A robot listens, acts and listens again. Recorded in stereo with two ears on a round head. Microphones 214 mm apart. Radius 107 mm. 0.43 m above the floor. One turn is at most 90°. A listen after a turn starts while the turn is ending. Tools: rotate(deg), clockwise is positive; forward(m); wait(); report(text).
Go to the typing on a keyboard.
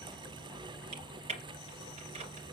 rotate(30)
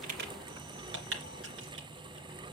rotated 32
rotate(90)
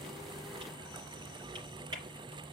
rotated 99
rotate(20)
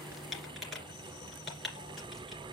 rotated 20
forward(1.0)
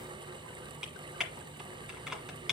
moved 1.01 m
forward(1.0)
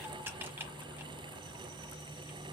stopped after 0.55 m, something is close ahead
rotate(10)
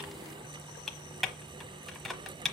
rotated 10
report("Arrived at the typing on a keyboard, straight ahead.")